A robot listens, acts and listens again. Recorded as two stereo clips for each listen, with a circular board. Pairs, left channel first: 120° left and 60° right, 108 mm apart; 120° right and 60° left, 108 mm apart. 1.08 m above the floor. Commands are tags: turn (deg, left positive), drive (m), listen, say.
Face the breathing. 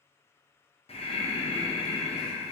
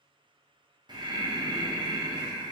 <turn deg="105"/>
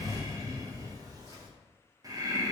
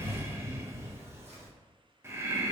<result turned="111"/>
<say>Facing the breathing.</say>